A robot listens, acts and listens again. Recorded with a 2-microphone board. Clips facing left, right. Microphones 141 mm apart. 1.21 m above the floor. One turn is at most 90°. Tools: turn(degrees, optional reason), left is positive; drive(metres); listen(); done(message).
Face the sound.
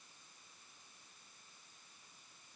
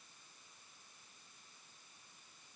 listen()
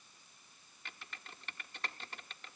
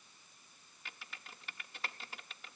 turn(degrees=-30)
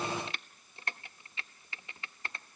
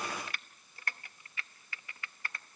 turn(degrees=25, reason="So it is at 25° left.")
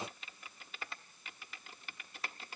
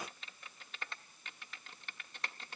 done("Facing the typing on a keyboard, 1 to 2 m away.")